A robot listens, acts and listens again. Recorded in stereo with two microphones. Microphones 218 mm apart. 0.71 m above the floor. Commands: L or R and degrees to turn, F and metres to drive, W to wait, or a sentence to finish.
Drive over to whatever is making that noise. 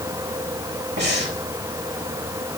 R55
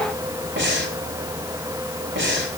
R65
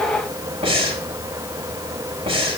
R30
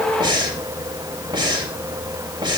R25
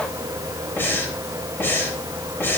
L10
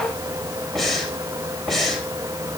F1.0
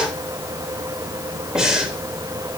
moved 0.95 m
F1.0
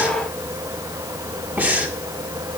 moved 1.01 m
R10
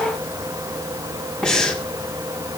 F1.0
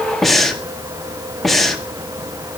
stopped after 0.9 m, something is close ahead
Arrived at the breathing, straight ahead.